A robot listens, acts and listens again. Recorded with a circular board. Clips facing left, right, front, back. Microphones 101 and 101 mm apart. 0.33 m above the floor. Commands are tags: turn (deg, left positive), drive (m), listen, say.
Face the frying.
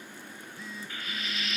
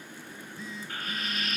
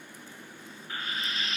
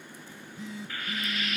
<turn deg="-55"/>
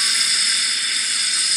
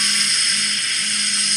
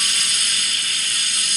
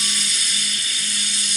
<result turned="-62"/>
<say>Found it: frying, straight ahead.</say>